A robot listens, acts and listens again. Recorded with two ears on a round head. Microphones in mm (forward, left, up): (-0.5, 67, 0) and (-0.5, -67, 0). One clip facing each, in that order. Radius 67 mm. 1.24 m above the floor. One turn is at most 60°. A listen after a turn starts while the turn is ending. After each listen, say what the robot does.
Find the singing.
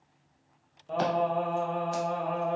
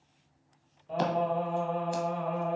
Turn 45° left.
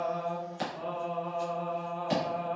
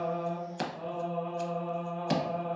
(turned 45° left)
Turn 45° left.
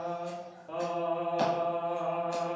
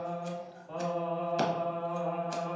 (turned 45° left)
Turn 60° left.
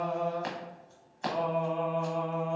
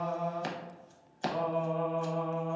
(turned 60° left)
Turn 60° left.
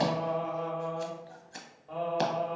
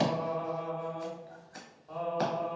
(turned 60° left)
Turn 10° left.
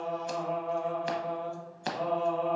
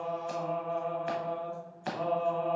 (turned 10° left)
Found it: singing, straight ahead, 1 to 2 m away.